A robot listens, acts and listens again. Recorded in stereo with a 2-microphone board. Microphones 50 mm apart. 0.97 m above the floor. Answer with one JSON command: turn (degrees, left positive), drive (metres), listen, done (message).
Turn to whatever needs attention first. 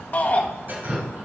{"turn": 35}
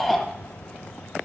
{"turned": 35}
{"done": "Found it: a shout, straight ahead."}